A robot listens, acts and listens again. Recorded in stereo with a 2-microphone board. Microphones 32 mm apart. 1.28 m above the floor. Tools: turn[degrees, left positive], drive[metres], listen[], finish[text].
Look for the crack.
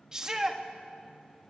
Action: listen[]
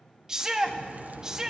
Thought: The crack: about 60° right or 120° right.
Action: turn[-60]
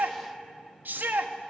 Action: listen[]
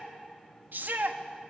Action: finish[I heard a crack, but can't make it out now. It was about straight ahead or 60° right.]